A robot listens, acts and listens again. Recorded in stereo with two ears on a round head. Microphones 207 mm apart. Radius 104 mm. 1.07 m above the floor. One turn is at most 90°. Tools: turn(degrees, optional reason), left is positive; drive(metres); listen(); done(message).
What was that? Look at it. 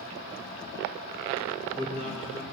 turn(degrees=-30, reason="The man speaking: about 30° right or 150° right.")
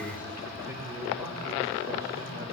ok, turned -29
turn(degrees=-10, reason="So it is at 10° right.")
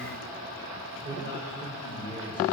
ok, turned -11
turn(degrees=-20, reason="The man speaking is now 20° right.")
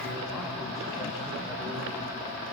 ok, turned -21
listen()
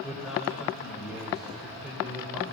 done("Found it: a man speaking, straight ahead, 2 to 4 m away.")